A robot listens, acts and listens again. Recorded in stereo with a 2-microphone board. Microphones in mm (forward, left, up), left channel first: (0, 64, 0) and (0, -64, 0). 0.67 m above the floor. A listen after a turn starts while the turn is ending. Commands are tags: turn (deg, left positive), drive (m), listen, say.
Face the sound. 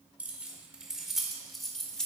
<turn deg="30"/>
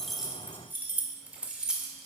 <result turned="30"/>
<turn deg="-30"/>
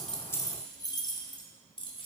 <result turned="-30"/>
<turn deg="40"/>
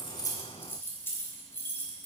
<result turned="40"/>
<turn deg="20"/>
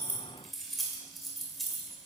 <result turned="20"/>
<say>Found it: keys jangling, straight ahead, 2 to 4 m away.</say>